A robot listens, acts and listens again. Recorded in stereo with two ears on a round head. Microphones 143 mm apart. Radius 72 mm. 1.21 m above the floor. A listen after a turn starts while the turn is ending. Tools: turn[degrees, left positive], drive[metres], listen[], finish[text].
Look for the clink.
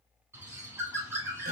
Action: listen[]
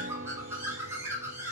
Action: listen[]
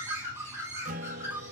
Action: finish[I can't make out a clink, only a guitar and a bird.]